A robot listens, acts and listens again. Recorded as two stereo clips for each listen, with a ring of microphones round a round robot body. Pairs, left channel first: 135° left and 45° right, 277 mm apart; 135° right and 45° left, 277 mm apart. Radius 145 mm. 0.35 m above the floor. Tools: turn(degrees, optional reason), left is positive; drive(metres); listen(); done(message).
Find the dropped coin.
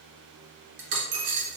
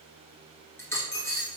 turn(degrees=-55, reason="The dropped coin: 55° right.")
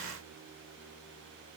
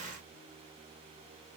done("Facing where the dropped coin came from. I can't hear it now.")